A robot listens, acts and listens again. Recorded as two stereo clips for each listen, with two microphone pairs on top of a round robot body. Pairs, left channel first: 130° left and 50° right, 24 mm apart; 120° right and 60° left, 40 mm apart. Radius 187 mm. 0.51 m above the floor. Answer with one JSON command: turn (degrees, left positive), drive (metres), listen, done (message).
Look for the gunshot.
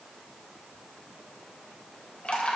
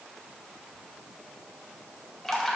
{"listen": true}
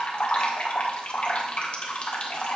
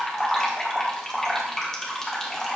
{"listen": true}
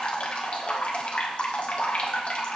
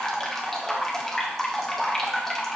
{"done": "I can't make out a gunshot to turn to."}